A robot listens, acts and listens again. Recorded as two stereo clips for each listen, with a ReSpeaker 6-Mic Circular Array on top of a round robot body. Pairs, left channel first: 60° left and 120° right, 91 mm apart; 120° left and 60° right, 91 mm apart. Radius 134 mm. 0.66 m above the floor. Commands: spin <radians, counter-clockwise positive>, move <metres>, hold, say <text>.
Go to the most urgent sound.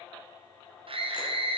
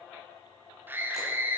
spin -2.27
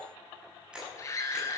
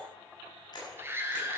move 1.0
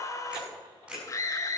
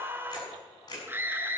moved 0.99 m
move 1.0
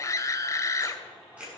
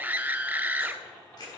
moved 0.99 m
spin 0.17
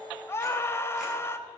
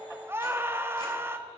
move 1.0
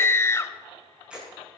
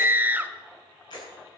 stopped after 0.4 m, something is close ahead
say Arrived at the scream, straight ahead.